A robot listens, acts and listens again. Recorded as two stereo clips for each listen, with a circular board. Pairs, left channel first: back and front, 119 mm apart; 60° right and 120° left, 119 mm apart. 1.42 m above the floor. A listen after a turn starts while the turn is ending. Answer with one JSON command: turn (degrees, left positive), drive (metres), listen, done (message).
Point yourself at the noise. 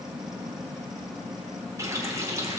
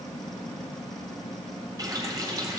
{"turn": 65}
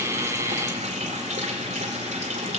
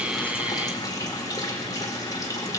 {"done": "Found it: a running tap, straight ahead, 2 to 4 m away."}